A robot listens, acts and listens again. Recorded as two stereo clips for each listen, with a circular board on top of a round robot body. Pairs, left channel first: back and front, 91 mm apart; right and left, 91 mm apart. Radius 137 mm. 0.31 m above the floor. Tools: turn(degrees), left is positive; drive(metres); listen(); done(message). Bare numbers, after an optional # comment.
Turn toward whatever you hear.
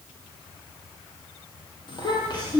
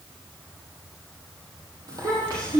# The child speaking: 140° left.
turn(140)
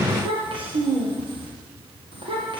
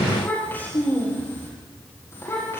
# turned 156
# The child speaking is now 30° right.
turn(-30)
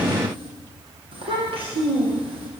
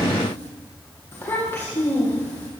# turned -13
# The child speaking is now 20° right.
turn(-20)
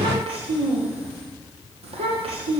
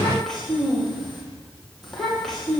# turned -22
done("Facing the child speaking, over 4 m away.")